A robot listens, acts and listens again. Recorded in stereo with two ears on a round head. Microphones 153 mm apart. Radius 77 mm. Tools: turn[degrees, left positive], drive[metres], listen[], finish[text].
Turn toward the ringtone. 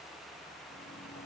Action: listen[]
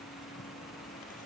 Action: listen[]
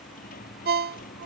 Thought: The ringtone: about 60° right or 120° right.
Action: turn[-60]
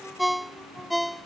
Action: finish[Facing the ringtone.]